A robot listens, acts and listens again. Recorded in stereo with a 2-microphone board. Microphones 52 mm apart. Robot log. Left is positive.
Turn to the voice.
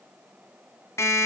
cmd idle
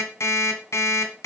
cmd idle
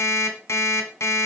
end: I can't make out anyone speaking, only an alarm clock.